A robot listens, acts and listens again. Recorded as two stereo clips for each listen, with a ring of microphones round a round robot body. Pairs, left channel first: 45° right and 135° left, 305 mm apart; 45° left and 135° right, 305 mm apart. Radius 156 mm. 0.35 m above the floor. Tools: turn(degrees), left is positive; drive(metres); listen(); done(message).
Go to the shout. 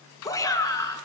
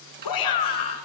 turn(degrees=35)
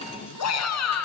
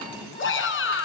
drive(metres=1.0)
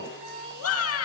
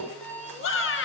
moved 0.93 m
drive(metres=1.0)
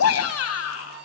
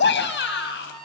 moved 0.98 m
drive(metres=1.0)
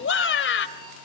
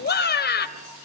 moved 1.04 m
drive(metres=1.0)
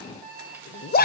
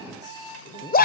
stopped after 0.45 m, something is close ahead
done("I am next to the shout.")